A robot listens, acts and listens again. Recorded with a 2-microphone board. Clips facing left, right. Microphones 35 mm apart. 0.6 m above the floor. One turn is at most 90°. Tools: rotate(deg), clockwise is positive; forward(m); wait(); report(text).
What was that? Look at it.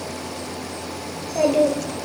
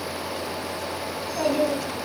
rotate(-60)
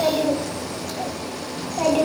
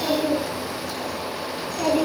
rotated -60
rotate(-55)
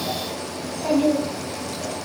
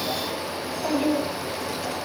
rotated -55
rotate(-30)
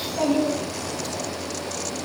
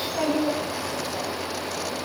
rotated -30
report("Found it: a child speaking, straight ahead.")